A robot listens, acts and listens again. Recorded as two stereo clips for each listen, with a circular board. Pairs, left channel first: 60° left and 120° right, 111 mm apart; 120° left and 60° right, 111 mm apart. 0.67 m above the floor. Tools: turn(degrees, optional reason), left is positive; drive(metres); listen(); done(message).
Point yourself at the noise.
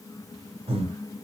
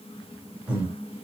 turn(degrees=-140, reason="The breathing: 140° right.")
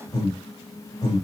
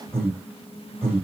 turn(degrees=10, reason="The breathing is now 10° left.")
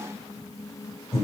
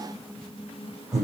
done("Facing the breathing, 2 to 4 m away.")